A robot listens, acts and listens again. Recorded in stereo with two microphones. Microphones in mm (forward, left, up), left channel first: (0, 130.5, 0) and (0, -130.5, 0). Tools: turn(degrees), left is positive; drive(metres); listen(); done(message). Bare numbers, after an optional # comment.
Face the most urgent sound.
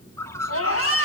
# The scream: about 60° left or 120° left.
turn(60)
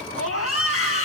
# So it is at 60° left.
turn(60)
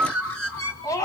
# The scream is now 15° left.
turn(15)
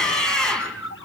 done("Facing the scream, over 4 m away.")